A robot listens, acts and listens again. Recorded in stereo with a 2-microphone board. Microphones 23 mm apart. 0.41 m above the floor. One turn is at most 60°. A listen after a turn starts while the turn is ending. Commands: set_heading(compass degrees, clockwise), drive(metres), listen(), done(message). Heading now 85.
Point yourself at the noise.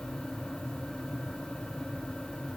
listen()
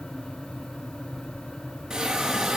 set_heading(105)
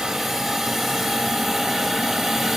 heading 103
done("Found it: a hiss, straight ahead, over 4 m away.")